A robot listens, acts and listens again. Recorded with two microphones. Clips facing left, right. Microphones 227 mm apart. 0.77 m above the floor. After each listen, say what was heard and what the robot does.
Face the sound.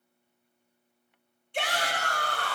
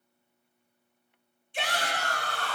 The shout: about 65° left or 115° left. Turn 65° left.
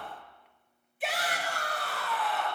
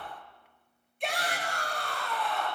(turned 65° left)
Facing the shout.